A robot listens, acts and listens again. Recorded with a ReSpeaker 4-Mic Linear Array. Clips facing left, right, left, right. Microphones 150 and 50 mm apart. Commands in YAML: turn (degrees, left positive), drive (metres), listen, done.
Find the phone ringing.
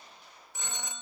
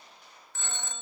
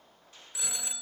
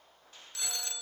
turn: 30
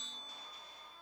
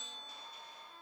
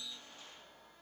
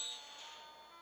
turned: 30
listen: true
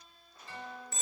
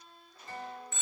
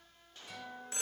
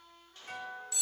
turn: 135
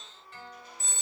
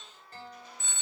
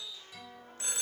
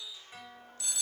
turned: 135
turn: 45
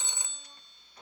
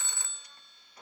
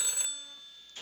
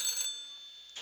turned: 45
turn: 20
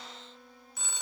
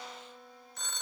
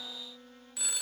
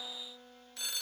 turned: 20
turn: 10
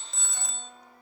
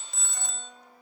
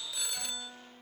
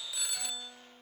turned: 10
done: "Found it: a phone ringing, straight ahead, under 1 m away."